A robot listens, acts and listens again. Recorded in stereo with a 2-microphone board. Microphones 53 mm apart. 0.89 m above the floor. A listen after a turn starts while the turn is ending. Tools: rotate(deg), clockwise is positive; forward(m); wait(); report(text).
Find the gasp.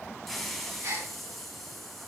rotate(60)
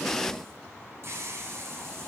wait()
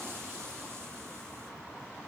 report("I heard a gasp, but can't make it out now. It was about straight ahead or 60° right.")